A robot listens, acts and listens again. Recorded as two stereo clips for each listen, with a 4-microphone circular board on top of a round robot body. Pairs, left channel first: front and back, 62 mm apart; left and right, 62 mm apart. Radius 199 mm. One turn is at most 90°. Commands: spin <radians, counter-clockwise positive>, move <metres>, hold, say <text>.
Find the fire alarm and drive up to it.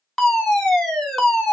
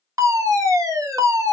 spin -1.40
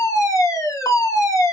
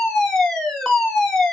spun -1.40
spin 0.17
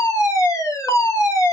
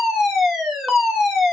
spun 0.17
move 1.0
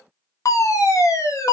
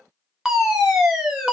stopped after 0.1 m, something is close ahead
spin -0.17
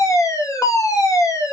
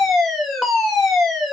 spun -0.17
say Blocked. The fire alarm is further on, straight ahead.